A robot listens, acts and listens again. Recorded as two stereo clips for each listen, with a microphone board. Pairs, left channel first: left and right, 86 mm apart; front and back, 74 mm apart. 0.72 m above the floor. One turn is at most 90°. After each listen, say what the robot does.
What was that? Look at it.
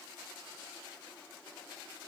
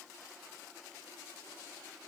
Keep listening.
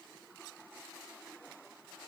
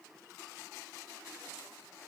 Keep listening.
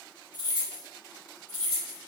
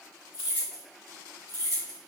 Turn 90° left.
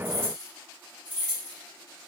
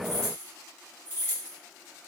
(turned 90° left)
Turn 55° left.
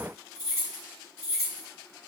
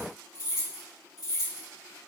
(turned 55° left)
Facing the keys jangling.